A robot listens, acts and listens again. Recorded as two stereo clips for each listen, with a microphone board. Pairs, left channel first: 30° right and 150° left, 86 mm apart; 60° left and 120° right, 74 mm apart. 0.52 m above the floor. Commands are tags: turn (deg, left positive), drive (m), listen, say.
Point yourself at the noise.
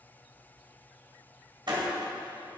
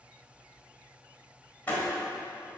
<turn deg="125"/>
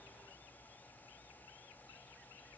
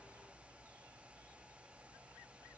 <say>Facing where the door slam came from. I can't hear it now.</say>